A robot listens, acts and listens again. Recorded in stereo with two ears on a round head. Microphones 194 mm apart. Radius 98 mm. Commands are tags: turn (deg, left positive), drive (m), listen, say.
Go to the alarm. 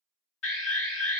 <turn deg="60"/>
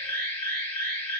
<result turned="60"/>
<turn deg="10"/>
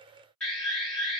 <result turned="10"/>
<drive m="1.0"/>
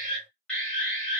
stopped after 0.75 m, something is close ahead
<say>Arrived at the alarm, straight ahead.</say>